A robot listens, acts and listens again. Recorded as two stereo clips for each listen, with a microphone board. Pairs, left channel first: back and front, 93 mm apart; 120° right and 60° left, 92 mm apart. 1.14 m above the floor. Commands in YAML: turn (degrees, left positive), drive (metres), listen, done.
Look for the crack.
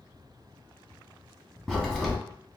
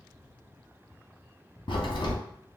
turn: -95
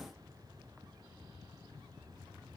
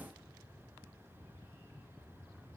done: "I heard a crack from this way, but can't make it out now."